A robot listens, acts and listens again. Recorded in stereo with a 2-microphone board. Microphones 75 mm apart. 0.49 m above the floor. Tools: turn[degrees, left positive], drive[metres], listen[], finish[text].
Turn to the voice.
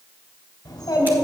Thought: The child speaking: about 50° left or 130° left.
Action: turn[50]
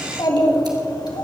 Thought: So it is at 75° left.
Action: turn[75]
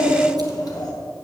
Thought: The child speaking is now 60° left.
Action: turn[60]
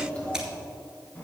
Thought: The child speaking is now 20° left.
Action: turn[20]
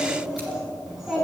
Action: finish[Facing the child speaking, 2 to 4 m away.]